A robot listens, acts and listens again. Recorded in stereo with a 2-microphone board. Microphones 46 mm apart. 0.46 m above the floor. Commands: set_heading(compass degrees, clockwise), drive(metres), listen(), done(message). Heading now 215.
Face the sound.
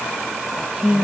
set_heading(235)
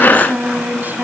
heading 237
set_heading(17)
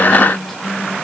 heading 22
done("Found it: singing, straight ahead.")